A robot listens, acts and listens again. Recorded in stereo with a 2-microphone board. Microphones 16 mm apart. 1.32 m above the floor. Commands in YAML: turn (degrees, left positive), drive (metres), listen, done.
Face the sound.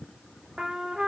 turn: -55
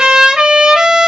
turn: -70
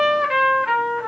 turn: -25
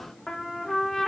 turn: 20
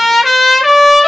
done: "Found it: a trumpet, straight ahead."